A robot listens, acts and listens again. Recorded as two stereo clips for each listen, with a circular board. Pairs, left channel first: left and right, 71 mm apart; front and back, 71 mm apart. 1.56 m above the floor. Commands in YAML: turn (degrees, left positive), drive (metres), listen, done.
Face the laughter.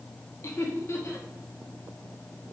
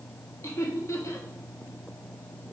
turn: 45
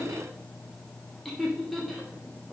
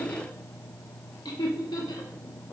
done: "Found it: laughter, straight ahead."